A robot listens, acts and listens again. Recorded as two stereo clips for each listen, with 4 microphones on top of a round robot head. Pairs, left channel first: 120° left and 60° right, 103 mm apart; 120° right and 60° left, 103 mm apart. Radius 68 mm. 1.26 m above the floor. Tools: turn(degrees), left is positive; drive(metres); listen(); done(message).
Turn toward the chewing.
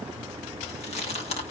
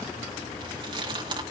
turn(degrees=105)
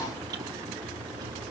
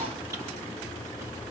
listen()
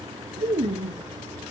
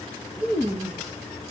done("Facing the chewing, 2 to 4 m away.")